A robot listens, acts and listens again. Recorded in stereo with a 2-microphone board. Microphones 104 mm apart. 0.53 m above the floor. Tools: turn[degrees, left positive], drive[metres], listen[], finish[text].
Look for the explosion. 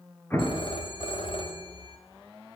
Thought: The explosion: about 20° left or 160° left.
Action: turn[20]
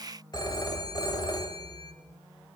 Action: listen[]
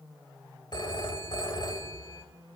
Action: finish[I heard an explosion, but can't make it out now. It was about straight ahead or 140° left.]